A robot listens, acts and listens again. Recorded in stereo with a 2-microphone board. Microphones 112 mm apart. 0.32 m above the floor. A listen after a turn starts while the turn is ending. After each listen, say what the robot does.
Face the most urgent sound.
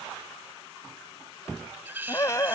Turn 30° left.
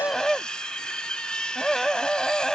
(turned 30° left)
Found it: a scream, straight ahead.